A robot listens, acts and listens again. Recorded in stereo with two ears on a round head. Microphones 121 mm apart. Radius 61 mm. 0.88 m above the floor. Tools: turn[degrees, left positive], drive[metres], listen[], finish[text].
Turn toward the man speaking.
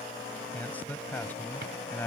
Action: turn[30]
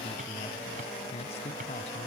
Thought: So it is at 130° left.
Action: turn[130]
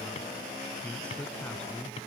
Action: finish[Found it: a man speaking, straight ahead.]